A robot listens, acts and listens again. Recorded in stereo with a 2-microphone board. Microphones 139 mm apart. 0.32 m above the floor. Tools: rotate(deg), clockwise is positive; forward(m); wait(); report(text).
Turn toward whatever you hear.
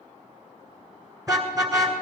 rotate(25)
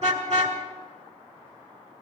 rotate(125)
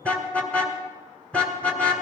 rotate(-10)
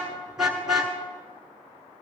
report("Found it: a car horn, straight ahead.")